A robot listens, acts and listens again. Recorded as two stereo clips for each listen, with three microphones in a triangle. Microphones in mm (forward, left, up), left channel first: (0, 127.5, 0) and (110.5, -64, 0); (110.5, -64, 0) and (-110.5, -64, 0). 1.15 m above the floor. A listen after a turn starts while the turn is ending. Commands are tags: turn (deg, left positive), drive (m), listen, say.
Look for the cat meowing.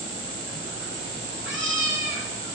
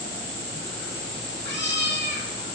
<turn deg="-40"/>
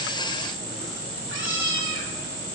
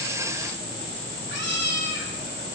<turn deg="-40"/>
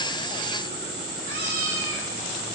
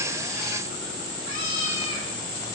<turn deg="-30"/>
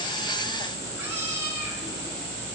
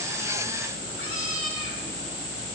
<listen/>
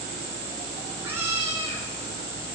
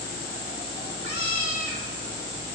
<turn deg="20"/>
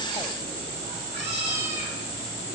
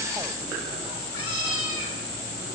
<say>Facing the cat meowing.</say>